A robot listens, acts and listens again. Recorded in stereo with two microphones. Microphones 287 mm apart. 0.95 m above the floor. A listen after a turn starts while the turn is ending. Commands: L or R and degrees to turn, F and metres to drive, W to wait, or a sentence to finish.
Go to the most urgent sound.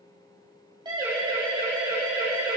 R15
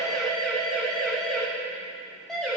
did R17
F1.0
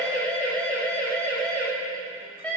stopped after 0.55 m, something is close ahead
Something is in my way. I am facing the siren but have not reached it.